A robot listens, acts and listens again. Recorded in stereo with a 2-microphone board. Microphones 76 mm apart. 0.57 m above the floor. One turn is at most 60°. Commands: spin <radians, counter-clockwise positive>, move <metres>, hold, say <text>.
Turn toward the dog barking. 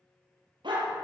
spin -1.05
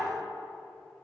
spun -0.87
spin -0.61
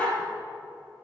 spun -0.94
spin 0.35
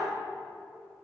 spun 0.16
spin 0.17
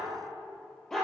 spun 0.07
say Facing the dog barking, 2 to 4 m away.